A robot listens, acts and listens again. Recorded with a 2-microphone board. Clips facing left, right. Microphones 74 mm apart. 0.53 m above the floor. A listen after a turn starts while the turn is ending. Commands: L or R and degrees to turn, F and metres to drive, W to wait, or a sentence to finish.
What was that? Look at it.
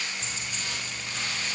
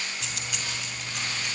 R90
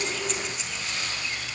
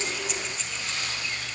W
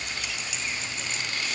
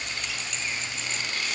W
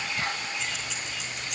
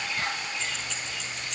Found it: keys jangling, straight ahead, over 4 m away.